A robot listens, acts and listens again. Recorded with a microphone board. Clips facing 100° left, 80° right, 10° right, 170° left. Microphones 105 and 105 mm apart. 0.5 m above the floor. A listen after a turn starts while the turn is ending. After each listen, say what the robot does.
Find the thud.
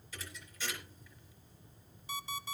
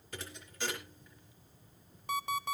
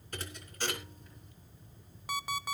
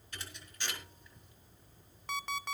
Turn 55° right.
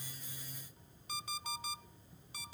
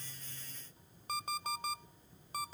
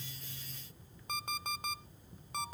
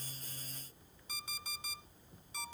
Facing where the thud came from. I can't hear it now.